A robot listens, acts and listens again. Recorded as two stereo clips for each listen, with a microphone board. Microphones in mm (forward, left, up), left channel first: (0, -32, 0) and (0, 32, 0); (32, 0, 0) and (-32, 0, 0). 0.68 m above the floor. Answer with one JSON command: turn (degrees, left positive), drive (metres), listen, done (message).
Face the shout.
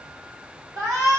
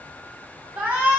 {"turn": 110}
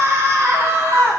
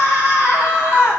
{"turn": 45}
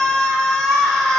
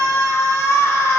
{"turn": -15}
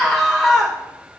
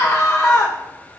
{"done": "Found it: a shout, straight ahead, 2 to 4 m away."}